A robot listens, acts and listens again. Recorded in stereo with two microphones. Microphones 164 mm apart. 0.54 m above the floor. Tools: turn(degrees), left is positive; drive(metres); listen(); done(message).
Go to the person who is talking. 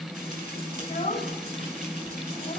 turn(degrees=45)
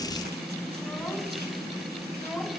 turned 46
drive(metres=1.0)
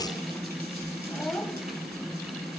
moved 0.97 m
drive(metres=1.0)
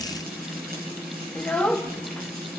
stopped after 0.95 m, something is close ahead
turn(degrees=10)
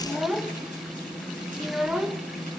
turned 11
done("I am next to the child speaking.")